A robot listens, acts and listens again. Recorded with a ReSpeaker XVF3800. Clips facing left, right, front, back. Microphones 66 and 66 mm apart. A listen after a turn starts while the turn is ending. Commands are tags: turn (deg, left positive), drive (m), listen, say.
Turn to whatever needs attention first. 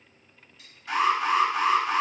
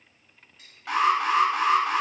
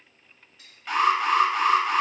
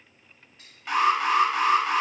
<turn deg="-100"/>
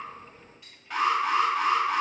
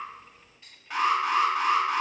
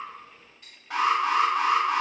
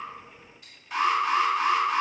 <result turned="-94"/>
<say>Facing the alarm, 1 to 2 m away.</say>